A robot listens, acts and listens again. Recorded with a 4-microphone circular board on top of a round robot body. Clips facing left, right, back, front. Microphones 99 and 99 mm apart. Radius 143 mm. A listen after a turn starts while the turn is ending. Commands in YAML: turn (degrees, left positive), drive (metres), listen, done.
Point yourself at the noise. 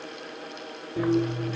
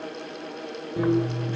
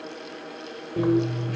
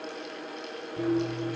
turn: -160
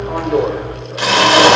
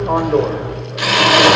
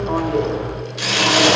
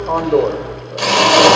turn: 35
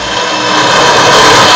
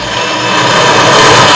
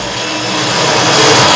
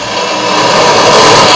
turn: 20
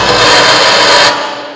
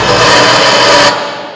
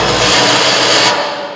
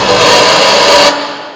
done: "Found it: a drill, straight ahead."